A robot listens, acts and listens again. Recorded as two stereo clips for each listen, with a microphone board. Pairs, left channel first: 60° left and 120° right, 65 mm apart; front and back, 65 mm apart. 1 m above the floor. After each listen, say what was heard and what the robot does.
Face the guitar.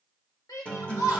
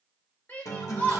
The guitar: 10° right. Turn 10° right.
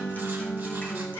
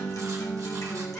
Facing the guitar.